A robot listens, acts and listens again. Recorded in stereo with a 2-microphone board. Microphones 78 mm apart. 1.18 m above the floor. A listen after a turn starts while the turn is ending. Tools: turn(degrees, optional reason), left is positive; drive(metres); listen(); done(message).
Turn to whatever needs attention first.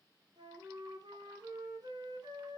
listen()
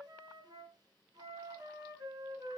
listen()
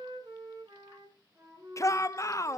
turn(degrees=40, reason="The shout: about 40° left or 140° left.")
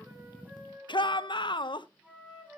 turn(degrees=100, reason="So it is at 100° left.")
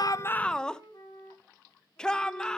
turn(degrees=10, reason="The shout is now 10° left.")
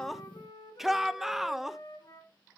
done("Facing the shout, under 1 m away.")